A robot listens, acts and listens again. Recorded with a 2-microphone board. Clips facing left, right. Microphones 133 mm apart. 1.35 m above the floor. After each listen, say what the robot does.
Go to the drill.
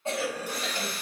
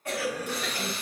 Turn 30° left.
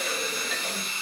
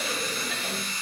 Turn 145° left.
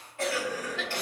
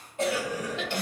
Keep listening.
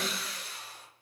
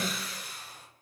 Drive 1.0 m forward.
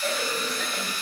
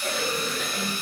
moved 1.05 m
Turn 25° right.
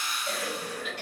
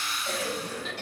Drive 1.0 m forward.
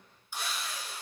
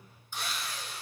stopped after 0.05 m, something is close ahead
I am next to the drill.